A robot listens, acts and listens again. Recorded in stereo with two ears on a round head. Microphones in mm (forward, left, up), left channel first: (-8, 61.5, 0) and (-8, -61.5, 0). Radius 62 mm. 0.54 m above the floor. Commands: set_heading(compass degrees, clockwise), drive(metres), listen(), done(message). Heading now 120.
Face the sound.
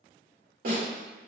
set_heading(185)
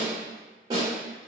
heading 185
set_heading(215)
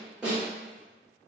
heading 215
done("Found it: a snare drum, straight ahead, 1 to 2 m away.")